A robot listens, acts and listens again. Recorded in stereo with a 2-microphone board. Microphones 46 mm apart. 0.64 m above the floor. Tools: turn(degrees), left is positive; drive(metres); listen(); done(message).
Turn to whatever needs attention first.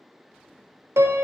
listen()
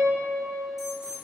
turn(degrees=-30)
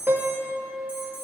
turn(degrees=-140)
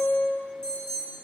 turn(degrees=15)
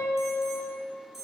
done("Facing the alarm, 2 to 4 m away.")